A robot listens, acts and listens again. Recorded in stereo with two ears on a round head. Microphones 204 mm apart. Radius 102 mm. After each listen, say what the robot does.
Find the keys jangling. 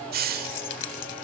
Turn 55° left.
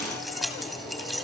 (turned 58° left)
Found it: keys jangling, straight ahead, 2 to 4 m away.